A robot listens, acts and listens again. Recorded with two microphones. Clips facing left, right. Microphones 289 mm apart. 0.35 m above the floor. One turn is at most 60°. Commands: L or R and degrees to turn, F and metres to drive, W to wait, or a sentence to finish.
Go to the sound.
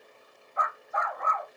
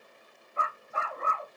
R35
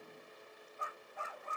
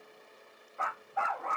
R60
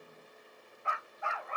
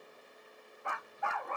R55
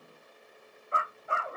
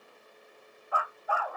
L25
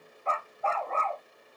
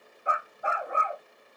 R15
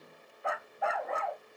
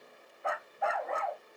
F1.0
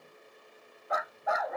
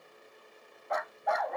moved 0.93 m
F1.0
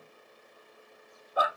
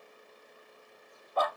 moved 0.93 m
F1.0
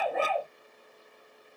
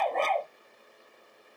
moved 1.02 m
F1.0
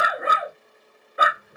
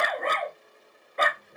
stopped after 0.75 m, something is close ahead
I am next to the dog barking.